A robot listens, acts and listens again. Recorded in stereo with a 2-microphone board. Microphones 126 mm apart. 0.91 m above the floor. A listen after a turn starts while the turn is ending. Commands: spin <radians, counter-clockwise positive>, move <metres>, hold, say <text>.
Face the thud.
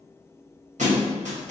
spin -1.22
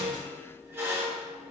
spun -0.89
hold
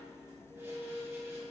say I heard a thud, but can't make it out now. It was about 20° right or 60° right.